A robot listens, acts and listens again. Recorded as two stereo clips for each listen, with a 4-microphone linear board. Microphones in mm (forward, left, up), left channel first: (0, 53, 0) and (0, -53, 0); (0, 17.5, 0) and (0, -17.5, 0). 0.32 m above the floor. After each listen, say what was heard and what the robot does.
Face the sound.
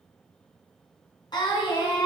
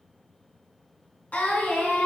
The singing: about 50° left or 130° left. Turn 50° left.
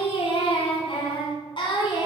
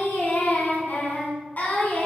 So it is at 45° left. Turn 45° left.
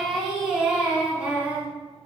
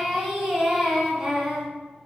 The singing is now 15° right. Turn 15° right.
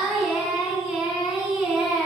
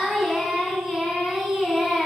Found it: singing, straight ahead, 2 to 4 m away.